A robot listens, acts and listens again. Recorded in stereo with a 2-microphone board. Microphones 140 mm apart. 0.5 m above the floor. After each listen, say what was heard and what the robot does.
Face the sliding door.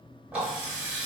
Keep listening.
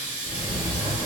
The sliding door: about 25° left or 155° left. Turn 25° left.
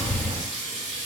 Found it: a sliding door, straight ahead, 1 to 2 m away.